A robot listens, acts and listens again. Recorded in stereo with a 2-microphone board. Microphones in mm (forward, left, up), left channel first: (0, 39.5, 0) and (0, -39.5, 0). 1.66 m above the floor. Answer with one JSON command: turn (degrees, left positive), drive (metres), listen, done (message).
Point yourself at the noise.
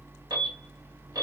{"turn": -65}
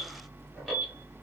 {"done": "Facing the alarm."}